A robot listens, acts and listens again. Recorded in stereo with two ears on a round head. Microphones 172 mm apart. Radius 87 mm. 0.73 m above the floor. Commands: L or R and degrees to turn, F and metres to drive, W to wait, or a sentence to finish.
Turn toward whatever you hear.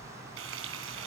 R75
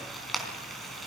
Facing the frying.